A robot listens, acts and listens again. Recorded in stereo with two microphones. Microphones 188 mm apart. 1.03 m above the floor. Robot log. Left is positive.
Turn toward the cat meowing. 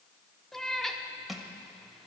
cmd yaw +30
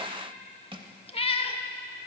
note: So it is at 145° left.
cmd yaw +145
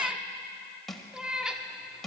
end: Facing the cat meowing.